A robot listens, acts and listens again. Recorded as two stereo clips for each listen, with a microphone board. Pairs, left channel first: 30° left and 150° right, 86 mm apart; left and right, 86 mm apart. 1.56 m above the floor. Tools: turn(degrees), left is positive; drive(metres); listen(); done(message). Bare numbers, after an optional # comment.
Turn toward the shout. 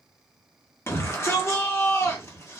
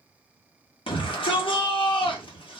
# The shout: 90° left.
turn(90)
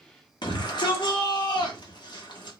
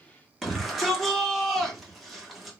done("Found it: a shout, straight ahead, 1 to 2 m away.")